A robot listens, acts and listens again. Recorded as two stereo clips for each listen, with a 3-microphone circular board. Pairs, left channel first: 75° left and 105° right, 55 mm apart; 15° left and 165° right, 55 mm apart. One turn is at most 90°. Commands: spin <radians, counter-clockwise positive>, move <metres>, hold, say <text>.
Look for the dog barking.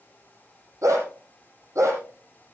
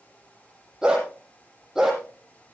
spin -1.48
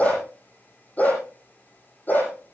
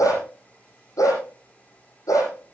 spin 0.35
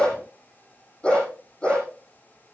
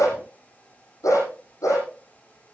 say Found it: a dog barking, straight ahead.